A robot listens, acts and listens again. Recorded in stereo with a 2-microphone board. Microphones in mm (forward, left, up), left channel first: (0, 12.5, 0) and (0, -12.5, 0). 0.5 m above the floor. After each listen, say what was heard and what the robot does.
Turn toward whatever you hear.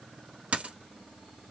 The dropped coin: about 70° right or 110° right. Turn 70° right.
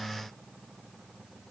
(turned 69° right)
Keep listening.
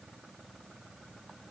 I heard a dropped coin, but can't make it out now. It was about straight ahead or 40° right.